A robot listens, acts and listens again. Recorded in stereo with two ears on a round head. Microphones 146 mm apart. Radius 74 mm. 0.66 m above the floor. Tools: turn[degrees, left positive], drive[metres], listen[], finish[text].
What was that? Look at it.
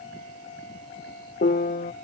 Thought: The piano: about 55° left or 125° left.
Action: turn[55]
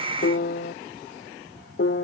Thought: So it is at 70° left.
Action: turn[70]
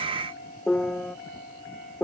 Action: finish[Found it: a piano, straight ahead.]